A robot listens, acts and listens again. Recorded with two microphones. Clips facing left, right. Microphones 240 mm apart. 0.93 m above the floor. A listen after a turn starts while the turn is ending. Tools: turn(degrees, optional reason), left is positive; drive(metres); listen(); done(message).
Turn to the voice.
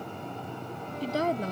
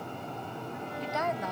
turn(degrees=35, reason="The woman speaking: about 35° left or 145° left.")
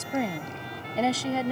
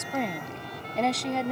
done("Facing the woman speaking.")